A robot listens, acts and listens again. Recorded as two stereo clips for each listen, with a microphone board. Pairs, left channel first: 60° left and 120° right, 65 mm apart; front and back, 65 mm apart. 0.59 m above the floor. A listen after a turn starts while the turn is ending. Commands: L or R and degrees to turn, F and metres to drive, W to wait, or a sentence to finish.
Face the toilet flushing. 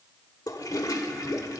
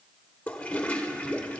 L70
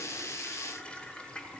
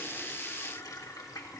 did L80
R10
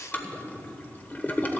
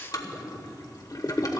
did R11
Facing the toilet flushing, 1 to 2 m away.